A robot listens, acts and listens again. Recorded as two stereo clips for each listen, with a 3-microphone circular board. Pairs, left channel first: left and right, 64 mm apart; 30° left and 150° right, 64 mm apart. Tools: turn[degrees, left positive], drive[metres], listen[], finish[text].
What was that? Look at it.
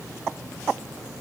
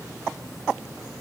Action: listen[]
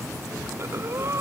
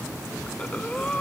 Thought: The breathing: 45° right.
Action: turn[-45]
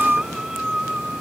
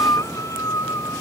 Thought: The breathing is now 10° right.
Action: turn[-10]
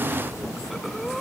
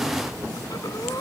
Action: finish[Found it: breathing, straight ahead.]